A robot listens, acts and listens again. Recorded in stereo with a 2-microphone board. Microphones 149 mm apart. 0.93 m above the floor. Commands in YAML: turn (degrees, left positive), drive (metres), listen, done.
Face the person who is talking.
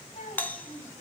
turn: 50
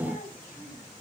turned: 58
turn: 75
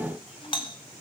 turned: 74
listen: true
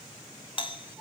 done: "Facing the child speaking, over 4 m away."